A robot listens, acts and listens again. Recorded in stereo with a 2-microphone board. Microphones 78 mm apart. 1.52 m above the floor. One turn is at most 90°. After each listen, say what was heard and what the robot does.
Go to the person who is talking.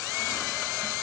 Keep listening.
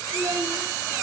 The child speaking: about 60° right or 120° right. Turn 60° right.
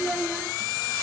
Drive 1.0 m forward.
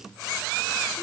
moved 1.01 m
Keep listening.
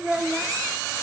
Drive 1.0 m forward.
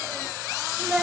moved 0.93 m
The child speaking is now 15° right. Turn 15° right.
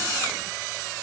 Keep listening.
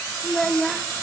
Drive 1.0 m forward.
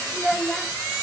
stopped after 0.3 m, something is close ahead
Arrived at the child speaking, straight ahead.